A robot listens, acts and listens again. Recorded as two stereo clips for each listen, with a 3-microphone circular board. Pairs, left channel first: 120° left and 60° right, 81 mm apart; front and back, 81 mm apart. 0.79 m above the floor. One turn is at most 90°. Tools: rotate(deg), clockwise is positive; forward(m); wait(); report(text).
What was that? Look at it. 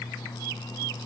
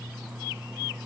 wait()
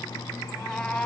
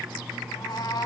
rotate(-40)
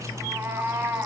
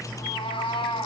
report("Facing the cat meowing.")